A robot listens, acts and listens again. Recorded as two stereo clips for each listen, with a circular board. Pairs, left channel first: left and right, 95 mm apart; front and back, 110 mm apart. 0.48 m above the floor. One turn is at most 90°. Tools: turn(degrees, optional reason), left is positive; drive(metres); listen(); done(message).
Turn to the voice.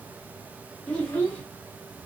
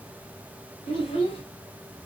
turn(degrees=15, reason="The child speaking: 15° left.")
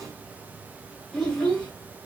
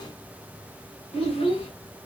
done("Found it: a child speaking, straight ahead.")